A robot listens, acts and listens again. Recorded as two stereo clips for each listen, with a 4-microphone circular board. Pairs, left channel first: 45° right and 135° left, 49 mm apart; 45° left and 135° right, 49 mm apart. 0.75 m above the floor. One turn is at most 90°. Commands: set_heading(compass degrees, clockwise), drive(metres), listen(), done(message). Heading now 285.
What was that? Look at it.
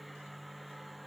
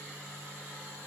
listen()
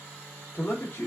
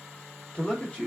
set_heading(300)
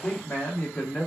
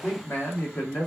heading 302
set_heading(282)
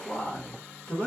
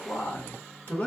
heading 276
set_heading(266)
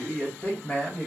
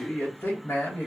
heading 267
set_heading(252)
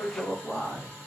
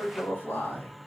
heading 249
done("Found it: a man speaking, straight ahead, 1 to 2 m away.")